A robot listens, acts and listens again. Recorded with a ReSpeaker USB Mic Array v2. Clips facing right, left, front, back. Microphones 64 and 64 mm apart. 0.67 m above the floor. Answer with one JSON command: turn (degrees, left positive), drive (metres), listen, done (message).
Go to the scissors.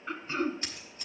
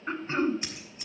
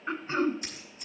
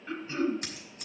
{"turn": 165}
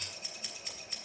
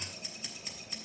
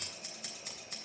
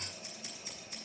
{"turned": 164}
{"drive": 1.0}
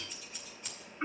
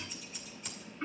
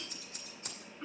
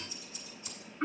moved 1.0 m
{"drive": 1.0}
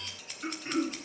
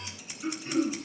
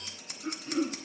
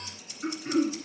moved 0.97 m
{"turn": 10}
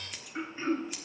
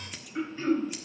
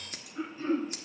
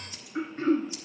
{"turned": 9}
{"drive": 1.0}
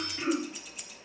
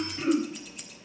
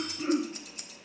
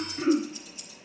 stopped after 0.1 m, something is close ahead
{"done": "I am next to the scissors."}